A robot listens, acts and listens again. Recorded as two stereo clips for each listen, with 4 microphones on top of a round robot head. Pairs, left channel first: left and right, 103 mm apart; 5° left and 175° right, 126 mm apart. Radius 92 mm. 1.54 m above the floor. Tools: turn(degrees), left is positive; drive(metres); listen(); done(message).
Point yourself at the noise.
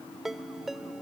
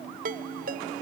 turn(degrees=180)
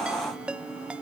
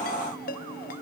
turn(degrees=-10)
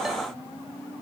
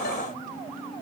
listen()
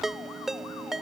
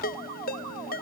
done("Found it: a ringtone, straight ahead.")